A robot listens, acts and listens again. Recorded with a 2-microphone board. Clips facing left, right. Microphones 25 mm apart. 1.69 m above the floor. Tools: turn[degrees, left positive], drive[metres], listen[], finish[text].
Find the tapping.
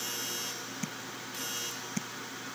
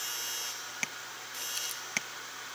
Thought: The tapping: about 60° right or 120° right.
Action: turn[-60]
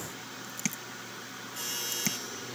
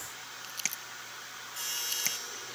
Action: finish[Facing the tapping.]